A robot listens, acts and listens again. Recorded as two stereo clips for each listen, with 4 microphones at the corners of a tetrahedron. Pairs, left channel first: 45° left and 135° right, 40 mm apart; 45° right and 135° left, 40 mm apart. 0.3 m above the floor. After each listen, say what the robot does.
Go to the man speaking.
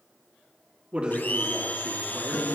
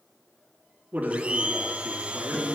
Turn 170° left.
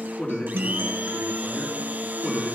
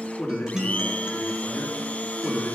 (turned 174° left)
Drive 1.0 m forward.
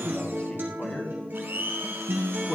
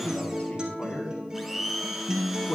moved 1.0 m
Drive 1.0 m forward.
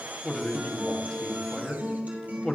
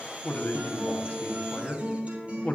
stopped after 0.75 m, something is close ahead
Turn 15° right.
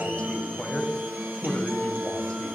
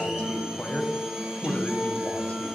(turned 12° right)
Arrived at the man speaking, straight ahead.